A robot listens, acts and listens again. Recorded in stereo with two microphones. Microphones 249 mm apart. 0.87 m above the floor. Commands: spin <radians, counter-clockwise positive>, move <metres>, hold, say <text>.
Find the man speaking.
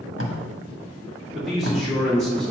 spin 0.52
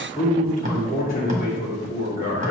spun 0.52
spin 2.53
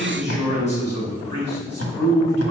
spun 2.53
spin 0.44
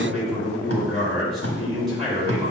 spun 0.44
say Facing the man speaking.